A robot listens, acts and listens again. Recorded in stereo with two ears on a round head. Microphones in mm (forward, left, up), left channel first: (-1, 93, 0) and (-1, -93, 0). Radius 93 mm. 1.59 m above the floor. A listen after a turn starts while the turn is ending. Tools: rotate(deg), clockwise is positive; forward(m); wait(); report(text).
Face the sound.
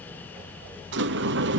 rotate(55)
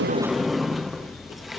report("Facing the sliding door.")